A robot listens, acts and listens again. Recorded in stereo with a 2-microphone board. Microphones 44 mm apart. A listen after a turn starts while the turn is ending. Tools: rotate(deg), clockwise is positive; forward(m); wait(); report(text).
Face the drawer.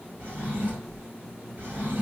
rotate(60)
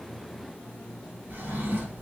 rotate(60)
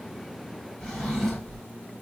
report("Found it: a drawer, straight ahead.")